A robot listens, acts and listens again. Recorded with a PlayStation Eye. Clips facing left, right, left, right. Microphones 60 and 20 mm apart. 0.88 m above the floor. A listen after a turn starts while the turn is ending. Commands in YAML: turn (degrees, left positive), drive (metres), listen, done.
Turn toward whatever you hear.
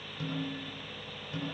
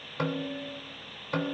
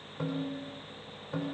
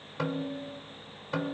turn: -50
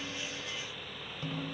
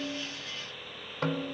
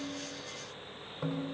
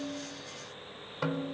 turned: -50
turn: -75
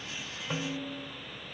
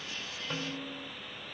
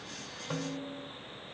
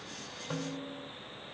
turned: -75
done: "Found it: a snare drum, straight ahead."